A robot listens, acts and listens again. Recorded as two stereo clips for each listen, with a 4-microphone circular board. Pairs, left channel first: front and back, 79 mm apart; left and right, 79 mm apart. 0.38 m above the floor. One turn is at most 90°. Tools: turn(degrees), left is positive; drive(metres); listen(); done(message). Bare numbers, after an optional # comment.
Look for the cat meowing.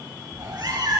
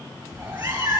# The cat meowing: 135° right.
turn(-90)
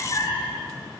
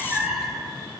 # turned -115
done("Facing the cat meowing.")